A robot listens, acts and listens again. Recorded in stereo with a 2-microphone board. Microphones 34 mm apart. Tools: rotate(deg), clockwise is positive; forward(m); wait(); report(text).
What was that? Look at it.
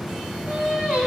rotate(40)
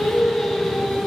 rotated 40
report("Found it: singing, straight ahead, over 4 m away.")